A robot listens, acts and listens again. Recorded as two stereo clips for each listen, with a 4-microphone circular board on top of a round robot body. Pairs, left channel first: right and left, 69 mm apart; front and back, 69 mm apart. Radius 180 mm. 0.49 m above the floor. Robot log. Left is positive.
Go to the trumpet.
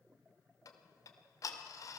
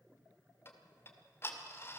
cmd idle
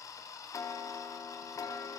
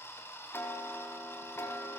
cmd idle
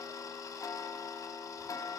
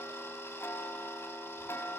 end: I can't make out a trumpet to turn to.